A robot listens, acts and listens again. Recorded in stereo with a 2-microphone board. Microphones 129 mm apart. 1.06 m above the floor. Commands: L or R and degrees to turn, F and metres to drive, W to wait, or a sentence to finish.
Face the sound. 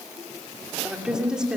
R30
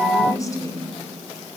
L25
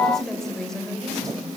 Facing the woman speaking, over 4 m away.